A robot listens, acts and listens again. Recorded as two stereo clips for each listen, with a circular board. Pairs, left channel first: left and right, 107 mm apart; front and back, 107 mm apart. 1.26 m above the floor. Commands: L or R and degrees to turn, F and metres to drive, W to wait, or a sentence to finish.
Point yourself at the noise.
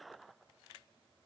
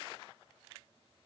W
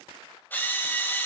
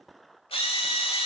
L20
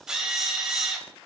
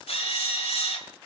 Found it: a drill, straight ahead, 2 to 4 m away.